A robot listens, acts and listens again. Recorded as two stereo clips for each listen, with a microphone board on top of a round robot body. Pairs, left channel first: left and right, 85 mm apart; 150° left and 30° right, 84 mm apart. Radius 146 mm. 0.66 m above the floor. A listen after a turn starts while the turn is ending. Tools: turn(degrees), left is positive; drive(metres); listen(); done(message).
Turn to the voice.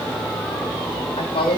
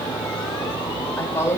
turn(degrees=95)
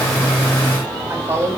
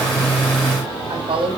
turn(degrees=-20)
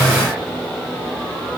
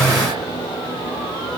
listen()
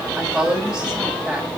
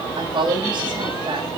done("Found it: a woman speaking, straight ahead, over 4 m away.")